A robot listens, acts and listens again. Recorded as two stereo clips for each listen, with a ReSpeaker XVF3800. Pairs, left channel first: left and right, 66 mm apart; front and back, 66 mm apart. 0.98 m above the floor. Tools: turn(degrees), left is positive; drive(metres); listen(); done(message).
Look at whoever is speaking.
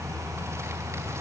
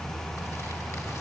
listen()
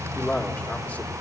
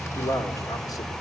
turn(degrees=25)
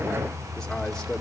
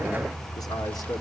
listen()
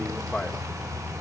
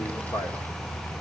done("Facing the man speaking.")